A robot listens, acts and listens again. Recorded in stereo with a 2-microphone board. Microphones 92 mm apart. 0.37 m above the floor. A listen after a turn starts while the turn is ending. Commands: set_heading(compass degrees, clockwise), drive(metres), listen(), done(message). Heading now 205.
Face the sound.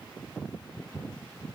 listen()
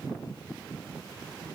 listen()
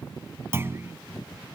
set_heading(235)
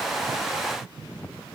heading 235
listen()
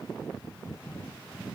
done("I heard a clunk, but can't make it out now. It was about straight ahead or 120° right.")